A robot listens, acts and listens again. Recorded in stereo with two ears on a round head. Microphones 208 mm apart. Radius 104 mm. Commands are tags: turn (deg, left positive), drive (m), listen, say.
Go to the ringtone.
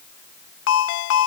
<turn deg="60"/>
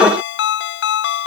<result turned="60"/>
<turn deg="50"/>
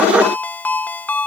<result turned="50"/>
<drive m="1.0"/>
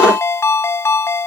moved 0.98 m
<turn deg="10"/>
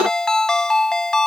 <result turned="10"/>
<drive m="1.0"/>
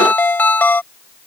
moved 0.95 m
<turn deg="10"/>
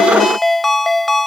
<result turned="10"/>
<drive m="1.0"/>
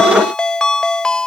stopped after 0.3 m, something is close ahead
<say>Arrived at the ringtone, straight ahead.</say>